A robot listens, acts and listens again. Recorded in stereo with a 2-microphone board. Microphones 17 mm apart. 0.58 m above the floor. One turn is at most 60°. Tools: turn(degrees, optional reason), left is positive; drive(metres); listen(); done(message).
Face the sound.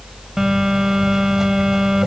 turn(degrees=-30, reason="The phone buzzing: about 30° right or 150° right.")
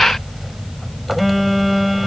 done("Facing the phone buzzing.")